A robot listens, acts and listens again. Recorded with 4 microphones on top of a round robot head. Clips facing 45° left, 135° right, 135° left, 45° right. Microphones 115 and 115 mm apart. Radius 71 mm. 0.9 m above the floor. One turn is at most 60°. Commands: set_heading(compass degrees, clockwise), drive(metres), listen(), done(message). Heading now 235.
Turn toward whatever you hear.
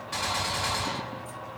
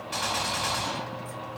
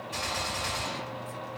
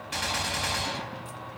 set_heading(290)
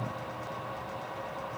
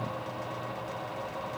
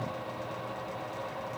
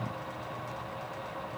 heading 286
done("I heard a gunshot from this way, but can't make it out now.")